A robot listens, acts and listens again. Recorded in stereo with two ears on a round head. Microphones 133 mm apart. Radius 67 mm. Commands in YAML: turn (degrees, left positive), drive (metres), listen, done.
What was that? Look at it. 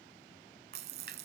turn: -70
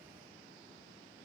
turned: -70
listen: true
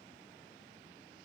done: "I heard a splash, but can't make it out now. It was about straight ahead or 40° right."